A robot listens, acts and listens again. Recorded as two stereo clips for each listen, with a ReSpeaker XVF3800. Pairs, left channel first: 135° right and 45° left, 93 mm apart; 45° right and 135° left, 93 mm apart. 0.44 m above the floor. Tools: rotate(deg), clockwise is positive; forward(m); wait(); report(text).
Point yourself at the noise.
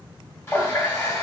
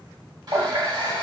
rotate(-165)
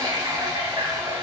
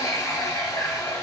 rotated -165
report("Found it: a running tap, straight ahead, 1 to 2 m away.")